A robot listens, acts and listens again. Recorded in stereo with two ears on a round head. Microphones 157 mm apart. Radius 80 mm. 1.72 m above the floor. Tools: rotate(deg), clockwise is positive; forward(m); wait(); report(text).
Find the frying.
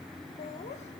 wait()
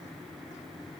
wait()
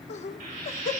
rotate(55)
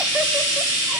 rotate(75)
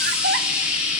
report("Facing the frying, over 4 m away.")